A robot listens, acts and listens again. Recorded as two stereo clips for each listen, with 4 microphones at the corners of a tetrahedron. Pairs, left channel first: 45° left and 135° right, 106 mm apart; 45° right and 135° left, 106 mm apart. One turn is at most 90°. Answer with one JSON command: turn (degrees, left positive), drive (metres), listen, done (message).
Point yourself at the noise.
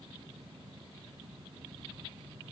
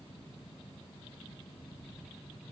{"listen": true}
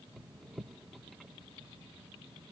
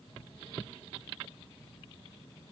{"listen": true}
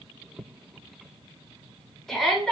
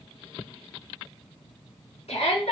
{"turn": -40}
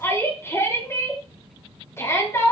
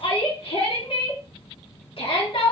{"turn": -20}
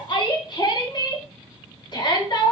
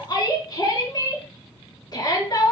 {"done": "Found it: a shout, straight ahead."}